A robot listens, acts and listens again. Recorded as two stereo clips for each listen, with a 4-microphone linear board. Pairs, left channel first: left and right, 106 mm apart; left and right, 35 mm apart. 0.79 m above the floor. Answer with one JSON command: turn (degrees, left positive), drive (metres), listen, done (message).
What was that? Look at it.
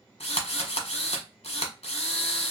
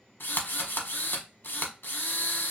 {"turn": 90}
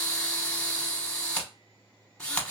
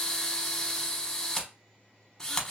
{"turn": 10}
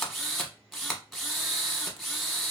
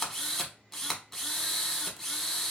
{"done": "Found it: a drill, straight ahead, under 1 m away."}